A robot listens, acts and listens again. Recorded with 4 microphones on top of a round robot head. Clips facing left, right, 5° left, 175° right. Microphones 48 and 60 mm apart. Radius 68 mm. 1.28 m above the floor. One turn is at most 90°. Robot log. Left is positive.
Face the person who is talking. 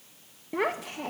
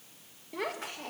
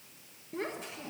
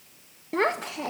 note: The child speaking: 155° left.
cmd yaw +90
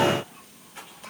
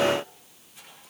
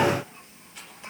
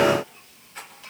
note: Nothing new. It was at 65° left.
cmd yaw +65
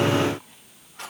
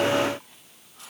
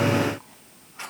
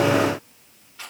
cmd idle
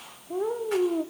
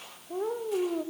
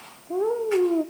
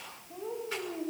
end: Facing the child speaking.